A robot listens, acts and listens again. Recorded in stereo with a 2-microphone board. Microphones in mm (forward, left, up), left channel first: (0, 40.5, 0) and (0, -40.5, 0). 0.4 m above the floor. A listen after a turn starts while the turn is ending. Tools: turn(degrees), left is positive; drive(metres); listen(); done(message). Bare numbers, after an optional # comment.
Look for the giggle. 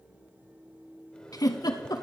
# The giggle: about 50° left or 130° left.
turn(50)
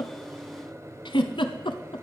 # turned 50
# So it is at 80° left.
turn(80)
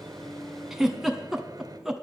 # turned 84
done("Facing the giggle.")